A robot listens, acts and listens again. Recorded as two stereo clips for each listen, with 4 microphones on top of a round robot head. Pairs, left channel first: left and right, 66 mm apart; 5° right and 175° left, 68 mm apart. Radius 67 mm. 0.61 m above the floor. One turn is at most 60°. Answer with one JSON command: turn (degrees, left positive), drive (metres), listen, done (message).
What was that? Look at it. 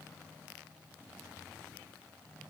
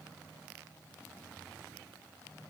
{"listen": true}
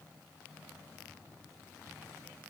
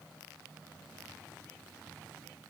{"listen": true}
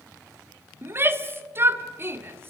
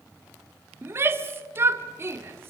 {"turn": -60}
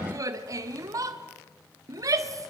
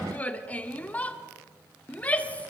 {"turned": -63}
{"turn": -60}
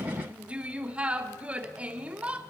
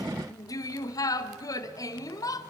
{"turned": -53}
{"turn": -20}
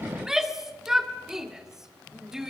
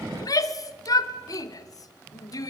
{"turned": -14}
{"turn": -10}
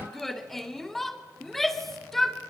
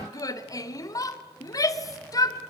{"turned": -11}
{"done": "Found it: a shout, straight ahead."}